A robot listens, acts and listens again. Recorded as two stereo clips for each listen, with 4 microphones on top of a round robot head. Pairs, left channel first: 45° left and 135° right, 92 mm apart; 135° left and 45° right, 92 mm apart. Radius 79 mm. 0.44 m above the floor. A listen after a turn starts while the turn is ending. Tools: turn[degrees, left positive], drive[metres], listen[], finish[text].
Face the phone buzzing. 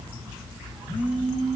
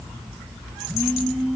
Thought: The phone buzzing: 45° left.
Action: turn[45]
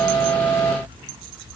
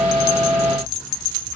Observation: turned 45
Action: listen[]
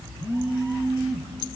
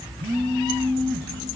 Action: finish[Facing the phone buzzing.]